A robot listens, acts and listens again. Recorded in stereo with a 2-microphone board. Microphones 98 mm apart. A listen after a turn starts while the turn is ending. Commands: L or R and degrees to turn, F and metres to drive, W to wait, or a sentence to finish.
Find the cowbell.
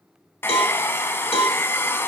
L90
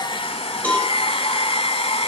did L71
L15
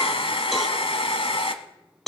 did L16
Found it: a cowbell, straight ahead, 2 to 4 m away.